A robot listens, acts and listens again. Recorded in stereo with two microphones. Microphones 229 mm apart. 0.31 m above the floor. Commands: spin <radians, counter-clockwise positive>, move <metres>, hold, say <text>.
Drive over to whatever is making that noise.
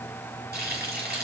spin -0.79
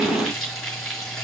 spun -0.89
move 1.0
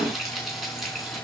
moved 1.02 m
move 1.0
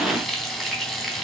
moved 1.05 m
move 1.0
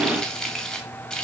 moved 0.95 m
move 1.0
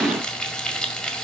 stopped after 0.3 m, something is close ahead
say I am next to the frying.